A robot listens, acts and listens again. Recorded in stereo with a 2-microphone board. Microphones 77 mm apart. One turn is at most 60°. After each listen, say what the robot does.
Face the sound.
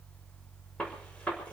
Turn 30° left.
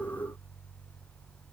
Keep listening.
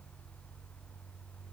I heard a gunshot, but can't make it out now. It was about 15° right or 135° left.